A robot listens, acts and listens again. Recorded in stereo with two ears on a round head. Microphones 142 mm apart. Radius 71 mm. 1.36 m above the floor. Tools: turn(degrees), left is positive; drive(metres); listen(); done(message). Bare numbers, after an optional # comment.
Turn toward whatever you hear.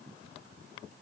listen()
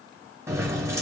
# The keys jangling: about 15° right or 165° right.
turn(-15)
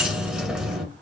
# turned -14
done("Facing the keys jangling, under 1 m away.")